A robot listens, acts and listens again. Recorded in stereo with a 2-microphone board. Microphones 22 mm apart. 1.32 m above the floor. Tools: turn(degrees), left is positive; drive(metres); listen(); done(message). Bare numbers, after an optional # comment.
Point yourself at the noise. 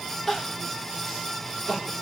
# The crying: about 20° left or 160° left.
turn(20)
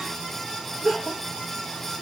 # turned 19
done("Found it: crying, straight ahead, 1 to 2 m away.")